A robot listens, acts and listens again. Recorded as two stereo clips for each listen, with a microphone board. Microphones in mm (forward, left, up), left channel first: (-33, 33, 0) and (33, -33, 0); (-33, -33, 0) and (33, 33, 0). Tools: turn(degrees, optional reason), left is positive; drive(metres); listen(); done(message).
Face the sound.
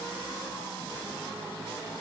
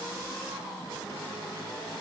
listen()
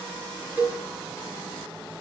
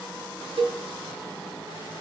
turn(degrees=30, reason="The cowbell: 30° left.")
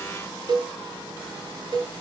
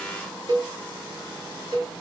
done("Facing the cowbell, over 4 m away.")